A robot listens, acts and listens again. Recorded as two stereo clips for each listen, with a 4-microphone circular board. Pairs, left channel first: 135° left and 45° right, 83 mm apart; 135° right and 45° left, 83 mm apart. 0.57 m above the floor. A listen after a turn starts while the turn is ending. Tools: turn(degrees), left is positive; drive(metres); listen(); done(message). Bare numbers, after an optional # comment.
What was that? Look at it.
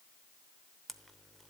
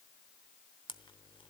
# The camera shutter: 140° right.
turn(-140)
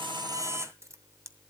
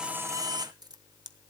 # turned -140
# The camera shutter is now 10° left.
turn(10)
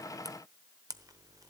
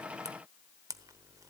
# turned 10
done("Facing the camera shutter.")